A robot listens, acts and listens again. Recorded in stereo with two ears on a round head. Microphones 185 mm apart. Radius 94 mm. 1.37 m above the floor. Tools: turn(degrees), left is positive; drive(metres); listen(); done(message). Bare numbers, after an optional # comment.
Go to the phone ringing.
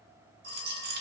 # The phone ringing: about 60° right or 120° right.
turn(-60)
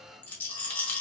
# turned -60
listen()
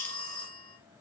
# So it is at 65° right.
turn(-65)
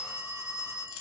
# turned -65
# The phone ringing is now 15° left.
turn(15)
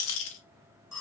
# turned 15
drive(1.0)
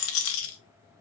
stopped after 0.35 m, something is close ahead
listen()
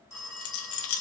done("Blocked. The phone ringing is further on, straight ahead.")